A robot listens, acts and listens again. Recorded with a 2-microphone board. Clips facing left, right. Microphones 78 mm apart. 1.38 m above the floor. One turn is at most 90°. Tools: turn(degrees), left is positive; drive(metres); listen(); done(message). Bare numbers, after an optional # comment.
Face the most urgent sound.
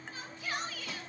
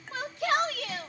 turn(-90)
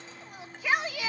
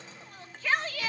# So it is at 15° left.
turn(15)
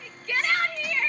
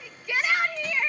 done("Facing the shout.")